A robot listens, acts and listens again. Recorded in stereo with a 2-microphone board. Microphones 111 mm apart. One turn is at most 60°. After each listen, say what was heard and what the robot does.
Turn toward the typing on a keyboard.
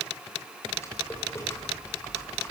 The typing on a keyboard: about 25° left or 155° left. Turn 25° left.
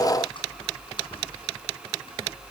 So it is at 130° left. Turn 60° left.
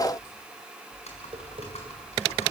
The typing on a keyboard is now 75° left. Turn 60° left.
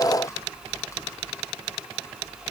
The typing on a keyboard is now 25° left. Turn 25° left.
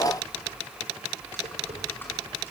The typing on a keyboard is now 20° left. Turn 20° left.
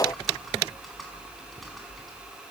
Facing the typing on a keyboard, over 4 m away.